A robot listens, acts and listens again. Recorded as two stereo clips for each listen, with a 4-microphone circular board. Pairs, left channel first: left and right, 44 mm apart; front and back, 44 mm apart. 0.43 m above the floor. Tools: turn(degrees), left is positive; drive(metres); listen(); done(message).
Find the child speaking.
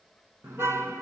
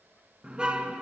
listen()
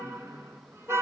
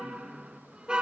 listen()
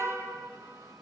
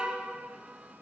done("I can't make out a child speaking, only a car horn.")